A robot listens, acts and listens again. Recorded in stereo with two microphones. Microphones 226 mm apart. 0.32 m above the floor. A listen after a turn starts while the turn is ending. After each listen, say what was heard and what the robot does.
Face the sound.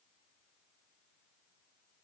Keep listening.
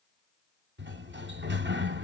The sliding door: about 55° right or 125° right. Turn 55° right.
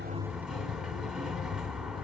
Found it: a sliding door, straight ahead, under 1 m away.